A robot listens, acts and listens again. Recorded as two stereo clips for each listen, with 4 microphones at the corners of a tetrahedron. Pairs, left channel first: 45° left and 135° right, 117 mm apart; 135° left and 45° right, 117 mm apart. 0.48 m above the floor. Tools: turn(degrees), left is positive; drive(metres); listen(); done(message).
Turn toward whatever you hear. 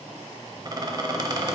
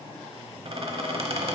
turn(degrees=-80)
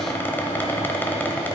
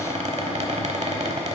turn(degrees=-25)
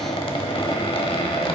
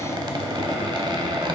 done("Facing the squeak.")